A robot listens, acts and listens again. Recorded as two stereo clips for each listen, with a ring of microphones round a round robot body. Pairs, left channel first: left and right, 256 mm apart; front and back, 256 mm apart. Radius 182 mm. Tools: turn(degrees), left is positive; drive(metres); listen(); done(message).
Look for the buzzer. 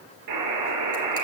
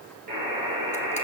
turn(degrees=-110)
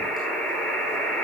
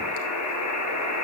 done("Facing the buzzer.")